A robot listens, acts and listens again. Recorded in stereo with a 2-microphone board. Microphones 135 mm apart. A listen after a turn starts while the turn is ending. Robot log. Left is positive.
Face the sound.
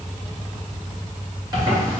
note: The zipper: about 35° right or 145° right.
cmd yaw -35
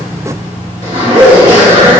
note: So it is at 110° right.
cmd yaw -110
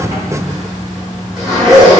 end: Found it: a zipper, straight ahead, 1 to 2 m away.